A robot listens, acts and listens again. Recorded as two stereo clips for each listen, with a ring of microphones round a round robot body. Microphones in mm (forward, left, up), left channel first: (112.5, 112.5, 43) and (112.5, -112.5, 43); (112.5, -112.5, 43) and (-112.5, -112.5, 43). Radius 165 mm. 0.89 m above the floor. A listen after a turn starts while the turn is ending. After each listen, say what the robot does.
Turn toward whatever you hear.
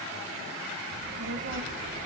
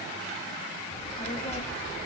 Turn 60° right.
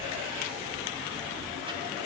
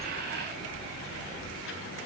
Turn 25° right.
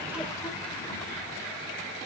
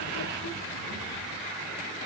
Keep listening.
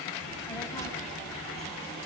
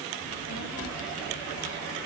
Turn 15° left.
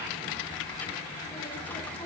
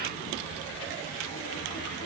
Turn 10° left.
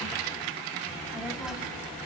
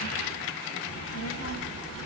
Facing the child speaking.